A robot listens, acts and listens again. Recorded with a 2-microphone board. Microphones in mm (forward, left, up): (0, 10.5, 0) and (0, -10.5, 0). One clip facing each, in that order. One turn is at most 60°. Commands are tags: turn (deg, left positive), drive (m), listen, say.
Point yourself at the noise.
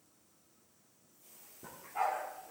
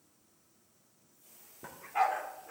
<turn deg="-55"/>
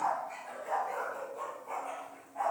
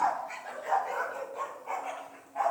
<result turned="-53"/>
<turn deg="-35"/>
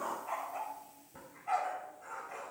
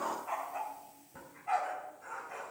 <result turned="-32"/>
<say>Facing the dog barking, 2 to 4 m away.</say>